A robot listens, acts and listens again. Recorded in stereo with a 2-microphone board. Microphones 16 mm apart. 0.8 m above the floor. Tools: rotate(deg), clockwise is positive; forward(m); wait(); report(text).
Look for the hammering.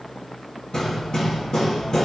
rotate(-50)
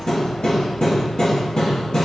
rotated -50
rotate(-75)
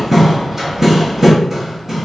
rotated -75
rotate(25)
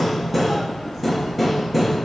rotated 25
report("Found it: hammering, straight ahead.")